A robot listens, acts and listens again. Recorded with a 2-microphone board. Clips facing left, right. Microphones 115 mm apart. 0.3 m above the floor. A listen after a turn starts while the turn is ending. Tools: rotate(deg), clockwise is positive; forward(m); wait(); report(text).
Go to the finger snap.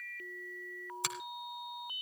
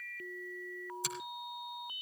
rotate(-70)
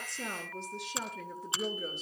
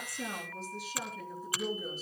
rotate(-25)
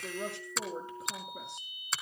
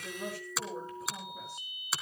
forward(1.0)
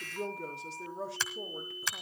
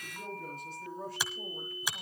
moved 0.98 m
rotate(15)
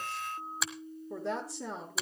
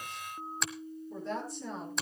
forward(1.0)
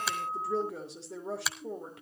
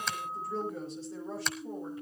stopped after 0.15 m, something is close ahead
report("I am next to the finger snap.")